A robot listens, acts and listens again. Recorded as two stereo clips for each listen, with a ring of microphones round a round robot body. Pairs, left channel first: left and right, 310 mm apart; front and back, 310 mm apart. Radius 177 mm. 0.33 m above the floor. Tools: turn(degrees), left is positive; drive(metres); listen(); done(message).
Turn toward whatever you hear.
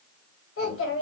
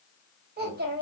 turn(degrees=130)
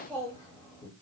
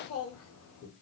turn(degrees=20)
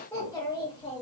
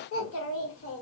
turn(degrees=25)
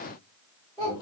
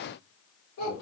turn(degrees=15)
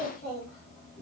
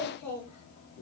turn(degrees=10)
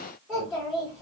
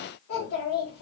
done("Facing the child speaking.")